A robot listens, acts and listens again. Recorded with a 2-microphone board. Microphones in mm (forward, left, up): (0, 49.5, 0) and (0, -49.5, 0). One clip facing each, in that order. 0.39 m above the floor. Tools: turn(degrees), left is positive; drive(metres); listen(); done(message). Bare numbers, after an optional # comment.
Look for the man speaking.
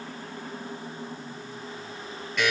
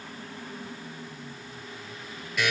listen()
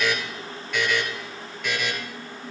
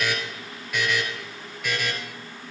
listen()
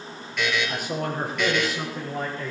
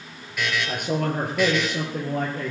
# The man speaking: about 65° right or 115° right.
turn(-65)
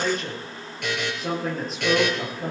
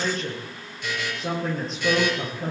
done("Found it: a man speaking, straight ahead, over 4 m away.")